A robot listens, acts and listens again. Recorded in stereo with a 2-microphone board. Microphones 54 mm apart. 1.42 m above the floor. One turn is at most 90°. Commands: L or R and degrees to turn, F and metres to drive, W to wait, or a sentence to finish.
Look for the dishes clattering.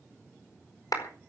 W
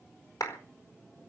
W
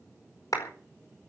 I can't make out dishes clattering to turn to.